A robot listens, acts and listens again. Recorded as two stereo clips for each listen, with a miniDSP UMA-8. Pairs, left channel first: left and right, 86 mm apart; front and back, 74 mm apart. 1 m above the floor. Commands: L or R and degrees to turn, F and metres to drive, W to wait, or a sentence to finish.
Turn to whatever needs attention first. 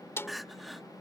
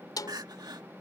L180
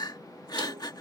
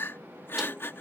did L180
L55
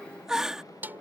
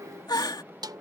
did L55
Facing the crying.